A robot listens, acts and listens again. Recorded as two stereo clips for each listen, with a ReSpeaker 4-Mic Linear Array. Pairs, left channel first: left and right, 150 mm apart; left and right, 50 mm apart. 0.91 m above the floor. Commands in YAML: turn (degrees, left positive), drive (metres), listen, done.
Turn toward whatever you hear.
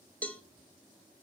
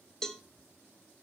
turn: 30
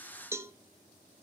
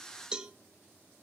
turn: -20
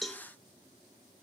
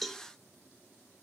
done: "Facing the cowbell, 1 to 2 m away."